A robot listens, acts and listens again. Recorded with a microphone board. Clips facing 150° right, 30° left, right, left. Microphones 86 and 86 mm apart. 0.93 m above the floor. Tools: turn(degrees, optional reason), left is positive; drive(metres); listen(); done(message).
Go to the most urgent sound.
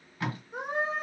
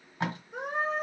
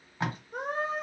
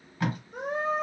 turn(degrees=-70, reason="The scream: 70° right.")
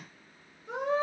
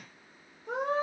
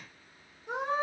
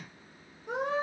drive(metres=1.0)
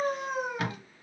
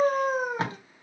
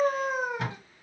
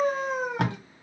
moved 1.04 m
turn(degrees=-10, reason="The scream is now 10° right.")
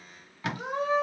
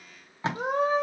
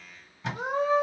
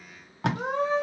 turn(degrees=-10, reason="The scream is now 10° right.")
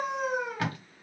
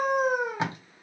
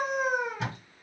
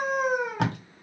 drive(metres=1.0)
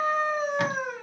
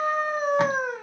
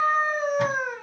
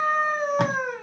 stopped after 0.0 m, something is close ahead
done("Arrived at the scream, straight ahead.")